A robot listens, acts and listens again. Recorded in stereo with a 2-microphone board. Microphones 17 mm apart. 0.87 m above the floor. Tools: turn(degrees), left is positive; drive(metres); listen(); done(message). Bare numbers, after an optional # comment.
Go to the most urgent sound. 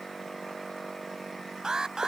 # The alarm: about 45° right or 135° right.
turn(-45)
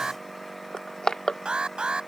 # So it is at 90° right.
turn(-90)
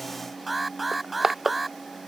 drive(1.0)
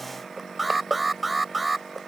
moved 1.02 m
# The alarm is now 10° right.
turn(-10)
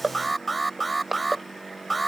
drive(1.0)
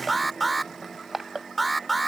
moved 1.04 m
drive(1.0)
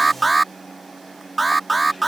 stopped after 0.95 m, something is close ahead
done("I am next to the alarm.")